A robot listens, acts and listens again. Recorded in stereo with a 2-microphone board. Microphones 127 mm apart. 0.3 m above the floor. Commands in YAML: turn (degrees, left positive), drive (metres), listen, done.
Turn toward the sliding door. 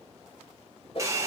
listen: true
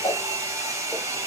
listen: true
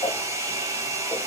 done: "I can't make out a sliding door to turn to."